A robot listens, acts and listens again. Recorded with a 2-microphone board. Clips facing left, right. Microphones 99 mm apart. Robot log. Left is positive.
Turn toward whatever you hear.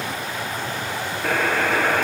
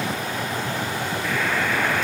note: The buzzer: about 55° left or 125° left.
cmd yaw +55
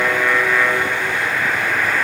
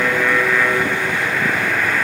end: Found it: a buzzer, straight ahead, 2 to 4 m away.